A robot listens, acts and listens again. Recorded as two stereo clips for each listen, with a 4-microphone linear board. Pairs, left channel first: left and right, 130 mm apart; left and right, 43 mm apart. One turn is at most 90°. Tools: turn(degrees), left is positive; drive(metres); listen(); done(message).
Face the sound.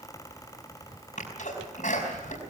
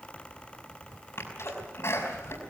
turn(degrees=75)
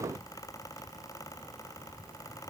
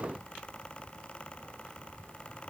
listen()
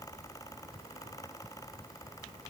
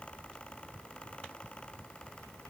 done("I heard a sneeze, but can't make it out now. It was about straight ahead or 30° left.")